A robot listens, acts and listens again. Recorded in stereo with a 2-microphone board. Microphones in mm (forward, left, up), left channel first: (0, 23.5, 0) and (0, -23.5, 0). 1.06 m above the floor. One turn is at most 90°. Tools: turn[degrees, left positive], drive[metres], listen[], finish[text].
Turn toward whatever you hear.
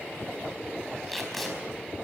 Action: turn[30]
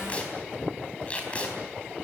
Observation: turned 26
Thought: So it is at 150° left.
Action: turn[90]
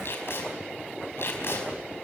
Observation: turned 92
Thought: The tape being pulled is now 55° left.
Action: turn[55]
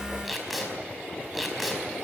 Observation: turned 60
Action: finish[Found it: tape being pulled, straight ahead.]